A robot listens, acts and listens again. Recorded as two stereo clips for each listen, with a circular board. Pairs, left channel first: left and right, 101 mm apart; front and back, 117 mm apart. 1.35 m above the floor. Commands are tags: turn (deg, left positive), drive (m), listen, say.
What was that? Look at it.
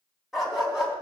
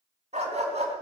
<turn deg="-175"/>
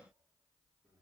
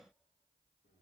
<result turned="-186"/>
<turn deg="10"/>
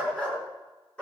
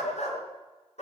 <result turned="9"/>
<turn deg="10"/>
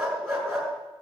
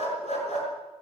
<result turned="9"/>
<say>Facing the dog barking, over 4 m away.</say>